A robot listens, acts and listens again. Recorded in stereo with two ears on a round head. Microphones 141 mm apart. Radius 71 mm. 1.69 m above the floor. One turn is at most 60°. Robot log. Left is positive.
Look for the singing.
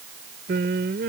note: The singing: about 70° right or 110° right.
cmd yaw -60
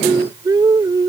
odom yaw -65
note: So it is at 25° right.
cmd yaw -25
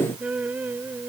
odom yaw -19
note: The singing is now 15° right.
cmd yaw -15
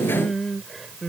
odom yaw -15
end: Found it: singing, straight ahead.